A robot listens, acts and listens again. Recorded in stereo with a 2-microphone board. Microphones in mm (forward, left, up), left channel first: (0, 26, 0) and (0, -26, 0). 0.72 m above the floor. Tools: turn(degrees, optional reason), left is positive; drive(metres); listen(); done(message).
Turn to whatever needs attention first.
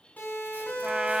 turn(degrees=35, reason="The siren: about 35° left or 145° left.")
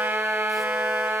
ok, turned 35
listen()
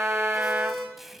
done("Found it: a siren, straight ahead, over 4 m away.")